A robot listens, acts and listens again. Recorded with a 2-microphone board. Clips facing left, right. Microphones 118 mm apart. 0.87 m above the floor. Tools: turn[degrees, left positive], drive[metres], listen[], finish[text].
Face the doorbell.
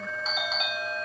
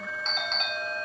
Action: turn[30]
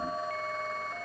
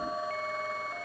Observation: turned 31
Action: listen[]
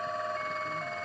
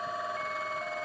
Action: listen[]
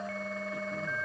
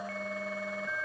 Action: finish[I heard a doorbell, but can't make it out now. It was about 25° right or 145° left.]